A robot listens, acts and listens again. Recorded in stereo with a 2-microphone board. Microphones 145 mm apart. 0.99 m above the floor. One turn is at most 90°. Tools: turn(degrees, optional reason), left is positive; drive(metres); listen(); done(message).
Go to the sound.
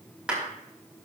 turn(degrees=-30)
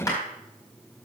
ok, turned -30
turn(degrees=25, reason="So it is at 25° left.")
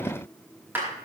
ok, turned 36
turn(degrees=-15, reason="The clap is now 15° right.")
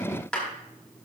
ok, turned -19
drive(metres=1.0)
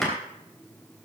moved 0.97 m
listen()
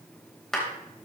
drive(metres=1.0)
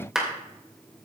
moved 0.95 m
drive(metres=1.0)
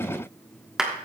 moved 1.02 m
drive(metres=1.0)
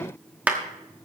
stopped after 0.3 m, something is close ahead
turn(degrees=-10, reason="The clap is now 10° right.")
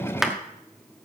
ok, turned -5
done("Arrived at the clap, straight ahead.")